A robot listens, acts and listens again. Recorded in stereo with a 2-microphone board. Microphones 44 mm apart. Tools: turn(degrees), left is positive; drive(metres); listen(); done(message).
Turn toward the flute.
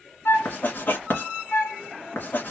turn(degrees=70)
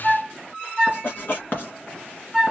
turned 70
done("Facing the flute.")